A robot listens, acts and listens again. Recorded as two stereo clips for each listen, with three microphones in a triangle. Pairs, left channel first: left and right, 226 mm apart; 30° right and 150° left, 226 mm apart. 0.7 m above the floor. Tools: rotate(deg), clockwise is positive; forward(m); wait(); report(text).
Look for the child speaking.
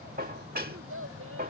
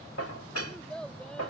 rotate(115)
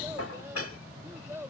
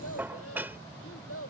rotate(10)
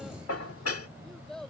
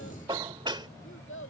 report("Found it: a child speaking, straight ahead.")